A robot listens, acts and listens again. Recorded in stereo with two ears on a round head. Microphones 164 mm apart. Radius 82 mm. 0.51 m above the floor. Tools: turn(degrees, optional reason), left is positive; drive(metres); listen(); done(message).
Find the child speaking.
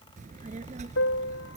turn(degrees=-35, reason="The child speaking: about 35° right or 145° right.")
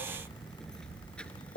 done("Facing the child speaking.")